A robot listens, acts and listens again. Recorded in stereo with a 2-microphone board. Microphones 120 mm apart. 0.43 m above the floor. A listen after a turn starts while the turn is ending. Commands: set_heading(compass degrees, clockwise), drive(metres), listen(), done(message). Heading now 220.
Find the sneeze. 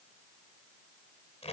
listen()
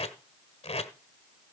listen()
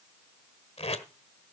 done("I can't make out a sneeze, only tape being pulled.")